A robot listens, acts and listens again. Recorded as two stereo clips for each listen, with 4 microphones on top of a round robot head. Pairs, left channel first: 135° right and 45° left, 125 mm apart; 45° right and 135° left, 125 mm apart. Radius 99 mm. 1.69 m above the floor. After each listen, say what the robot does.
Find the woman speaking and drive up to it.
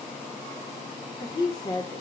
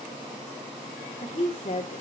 Turn 80° right.
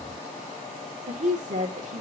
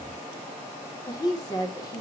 Turn 15° left.
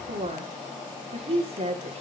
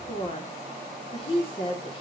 Drive 1.0 m forward.
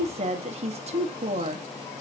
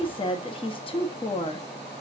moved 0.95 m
Drive 1.0 m forward.
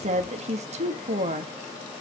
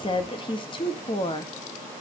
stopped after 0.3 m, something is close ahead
Turn 10° left.
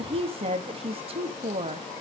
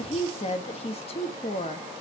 I am next to the woman speaking.